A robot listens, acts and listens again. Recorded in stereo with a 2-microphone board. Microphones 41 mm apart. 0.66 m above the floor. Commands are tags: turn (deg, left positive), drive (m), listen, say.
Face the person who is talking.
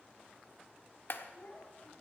<turn deg="40"/>
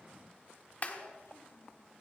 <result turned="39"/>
<turn deg="100"/>
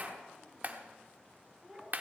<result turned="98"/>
<say>Facing the child speaking.</say>